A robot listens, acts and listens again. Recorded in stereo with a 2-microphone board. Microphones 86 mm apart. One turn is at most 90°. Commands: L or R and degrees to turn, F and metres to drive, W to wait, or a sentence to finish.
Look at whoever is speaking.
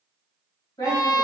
L60
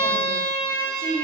L55
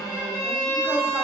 W
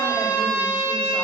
W
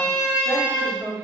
Found it: a woman speaking, straight ahead.